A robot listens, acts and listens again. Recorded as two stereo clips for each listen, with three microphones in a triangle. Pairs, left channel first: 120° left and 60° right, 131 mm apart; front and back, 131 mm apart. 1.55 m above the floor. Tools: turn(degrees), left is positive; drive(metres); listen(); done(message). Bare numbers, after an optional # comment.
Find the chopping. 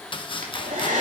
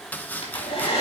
# The chopping: 75° left.
turn(75)
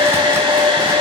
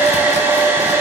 listen()
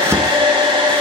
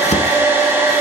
# The chopping is now 10° left.
turn(10)
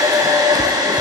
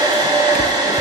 listen()
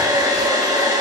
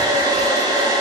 listen()
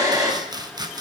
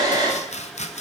done("Facing the chopping.")